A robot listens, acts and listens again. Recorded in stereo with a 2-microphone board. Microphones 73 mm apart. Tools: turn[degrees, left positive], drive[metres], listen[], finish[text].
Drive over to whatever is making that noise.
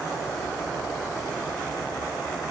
Action: listen[]
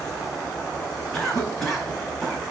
Action: turn[30]
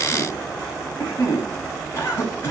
Thought: So it is at 150° left.
Action: turn[150]
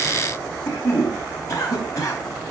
Thought: The cough is now 50° left.
Action: turn[50]
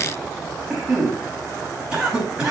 Thought: The cough is now 10° right.
Action: turn[-10]
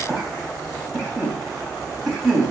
Action: drive[1.0]
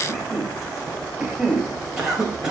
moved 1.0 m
Action: drive[1.0]
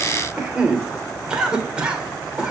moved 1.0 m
Thought: The cough is now 15° right.
Action: turn[-15]
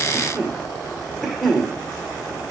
Action: drive[1.0]
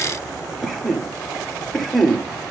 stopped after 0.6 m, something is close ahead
Action: finish[I am next to the cough.]